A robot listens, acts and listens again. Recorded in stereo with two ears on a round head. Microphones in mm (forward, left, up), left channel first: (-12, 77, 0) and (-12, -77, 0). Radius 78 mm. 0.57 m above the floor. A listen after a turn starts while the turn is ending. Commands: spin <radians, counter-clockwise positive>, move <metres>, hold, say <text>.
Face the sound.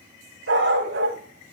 spin -1.57
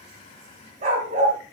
spin -0.79
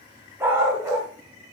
spin -0.35
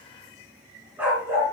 spin -0.17
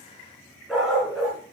say Found it: a dog barking, straight ahead, 2 to 4 m away.